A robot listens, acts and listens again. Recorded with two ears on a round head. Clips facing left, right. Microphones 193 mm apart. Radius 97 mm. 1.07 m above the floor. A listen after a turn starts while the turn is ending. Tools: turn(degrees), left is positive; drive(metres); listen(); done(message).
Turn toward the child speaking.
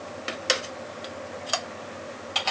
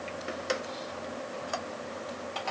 listen()
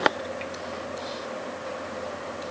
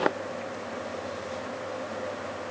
listen()
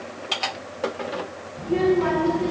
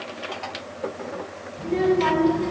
turn(degrees=-25)
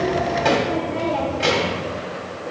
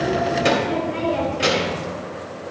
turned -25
turn(degrees=-130)
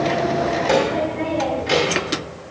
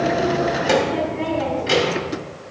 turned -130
turn(degrees=-10)
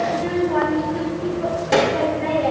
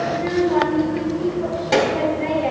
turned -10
done("Facing the child speaking.")